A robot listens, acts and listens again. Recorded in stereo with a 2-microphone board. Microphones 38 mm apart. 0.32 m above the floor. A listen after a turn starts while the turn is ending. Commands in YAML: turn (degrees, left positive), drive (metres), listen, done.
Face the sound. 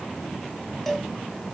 turn: 30
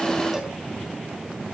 listen: true
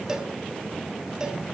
turn: -20
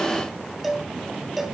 done: "Found it: a cowbell, straight ahead."